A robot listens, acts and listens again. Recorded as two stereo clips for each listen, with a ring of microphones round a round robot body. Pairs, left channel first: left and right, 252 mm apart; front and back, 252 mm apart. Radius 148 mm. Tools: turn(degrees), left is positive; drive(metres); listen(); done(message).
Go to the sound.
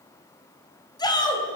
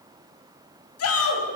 turn(degrees=15)
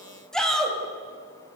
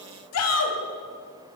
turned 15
drive(metres=1.0)
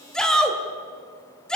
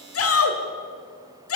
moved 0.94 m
drive(metres=1.0)
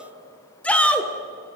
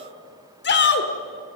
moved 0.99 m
turn(degrees=10)
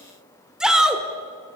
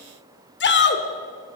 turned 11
drive(metres=1.0)
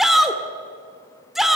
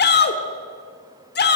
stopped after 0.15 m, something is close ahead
done("Arrived at the shout, straight ahead.")